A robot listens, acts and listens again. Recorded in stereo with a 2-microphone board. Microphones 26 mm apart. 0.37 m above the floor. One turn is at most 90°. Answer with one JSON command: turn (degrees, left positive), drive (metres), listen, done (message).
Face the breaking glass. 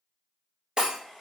{"turn": -40}
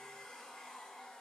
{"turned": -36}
{"listen": true}
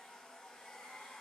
{"done": "I heard breaking glass, but can't make it out now. It was about 5° right or 105° right."}